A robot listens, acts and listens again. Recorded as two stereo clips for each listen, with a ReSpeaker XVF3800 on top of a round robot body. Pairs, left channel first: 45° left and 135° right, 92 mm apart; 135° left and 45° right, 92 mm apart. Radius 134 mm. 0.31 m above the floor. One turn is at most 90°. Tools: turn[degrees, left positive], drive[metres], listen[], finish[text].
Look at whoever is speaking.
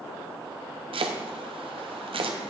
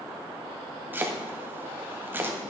Action: listen[]
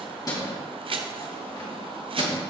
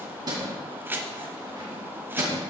Action: listen[]
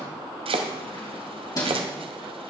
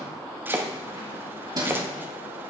Action: finish[I can't make out anyone speaking to turn to.]